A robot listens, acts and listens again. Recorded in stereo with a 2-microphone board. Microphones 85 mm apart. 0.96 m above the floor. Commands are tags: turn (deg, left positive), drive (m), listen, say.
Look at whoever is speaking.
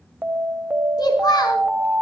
<turn deg="55"/>
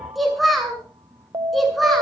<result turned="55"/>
<say>Found it: a child speaking, straight ahead.</say>